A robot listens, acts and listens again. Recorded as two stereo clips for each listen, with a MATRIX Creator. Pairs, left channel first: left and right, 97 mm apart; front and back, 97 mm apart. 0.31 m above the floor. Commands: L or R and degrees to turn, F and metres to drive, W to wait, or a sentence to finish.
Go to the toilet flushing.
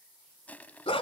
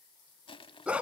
W
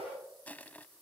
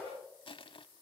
W
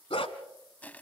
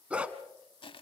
I can't make out a toilet flushing, only crushing and a dog barking.